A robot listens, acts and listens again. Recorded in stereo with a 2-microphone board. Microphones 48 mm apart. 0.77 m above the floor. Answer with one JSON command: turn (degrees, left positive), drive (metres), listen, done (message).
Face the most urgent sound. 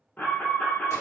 {"turn": 35}
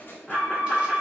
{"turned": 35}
{"done": "Found it: an alarm, straight ahead, under 1 m away."}